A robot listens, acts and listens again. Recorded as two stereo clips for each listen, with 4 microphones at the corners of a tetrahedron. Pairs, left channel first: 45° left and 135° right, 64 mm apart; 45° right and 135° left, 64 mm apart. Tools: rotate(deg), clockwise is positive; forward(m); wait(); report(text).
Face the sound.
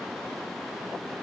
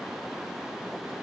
wait()
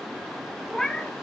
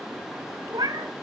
rotate(-120)
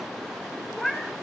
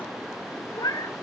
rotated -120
rotate(40)
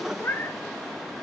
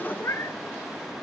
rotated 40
rotate(10)
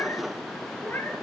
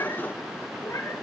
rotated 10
rotate(10)
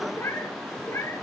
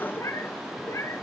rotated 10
report("Found it: a cat meowing, straight ahead.")